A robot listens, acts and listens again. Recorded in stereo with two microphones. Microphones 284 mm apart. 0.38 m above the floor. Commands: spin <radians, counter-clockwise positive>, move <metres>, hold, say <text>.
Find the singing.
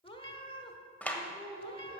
spin -1.22
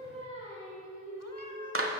spin -0.44
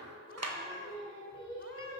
say Facing the singing, over 4 m away.